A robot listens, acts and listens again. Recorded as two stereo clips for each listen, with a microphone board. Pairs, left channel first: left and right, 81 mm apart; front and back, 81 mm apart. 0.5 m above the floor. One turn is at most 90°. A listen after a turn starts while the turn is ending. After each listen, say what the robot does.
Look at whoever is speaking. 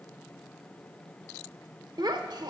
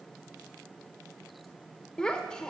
Turn 80° right.
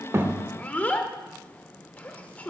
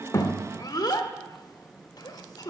Turn 20° left.
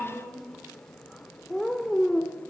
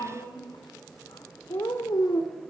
Facing the child speaking, under 1 m away.